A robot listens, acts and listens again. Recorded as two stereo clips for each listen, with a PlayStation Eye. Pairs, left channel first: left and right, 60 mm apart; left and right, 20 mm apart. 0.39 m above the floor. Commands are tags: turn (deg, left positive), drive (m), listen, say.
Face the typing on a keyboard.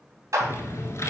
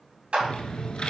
<turn deg="55"/>
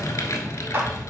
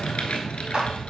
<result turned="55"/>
<turn deg="70"/>
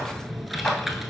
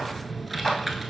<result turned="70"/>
<say>Facing the typing on a keyboard.</say>